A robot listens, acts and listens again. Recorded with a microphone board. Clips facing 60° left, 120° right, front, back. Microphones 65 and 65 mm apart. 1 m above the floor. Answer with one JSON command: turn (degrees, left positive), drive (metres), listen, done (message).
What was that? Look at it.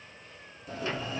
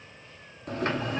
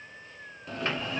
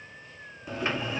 {"turn": -100}
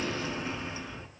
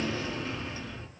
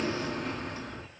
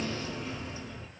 {"turn": -15}
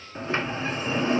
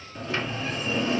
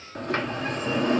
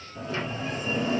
{"done": "Facing the sliding door."}